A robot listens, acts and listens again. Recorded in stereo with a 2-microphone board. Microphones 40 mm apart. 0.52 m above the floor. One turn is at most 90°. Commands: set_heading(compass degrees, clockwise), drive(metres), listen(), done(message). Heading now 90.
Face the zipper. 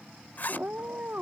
set_heading(40)
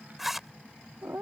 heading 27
done("Facing the zipper.")